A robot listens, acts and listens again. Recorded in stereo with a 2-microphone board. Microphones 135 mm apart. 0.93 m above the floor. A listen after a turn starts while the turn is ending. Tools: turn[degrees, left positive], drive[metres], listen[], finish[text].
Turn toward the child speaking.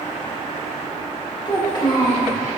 Thought: The child speaking: about 40° left or 140° left.
Action: turn[40]
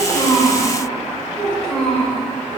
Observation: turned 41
Thought: So it is at 10° left.
Action: turn[10]
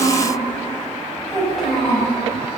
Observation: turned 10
Action: finish[Facing the child speaking, 2 to 4 m away.]